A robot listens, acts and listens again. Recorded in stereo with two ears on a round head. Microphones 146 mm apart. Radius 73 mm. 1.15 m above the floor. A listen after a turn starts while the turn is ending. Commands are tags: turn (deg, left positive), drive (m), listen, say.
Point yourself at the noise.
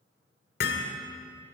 <turn deg="65"/>
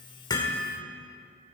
<say>Found it: hammering, straight ahead, 1 to 2 m away.</say>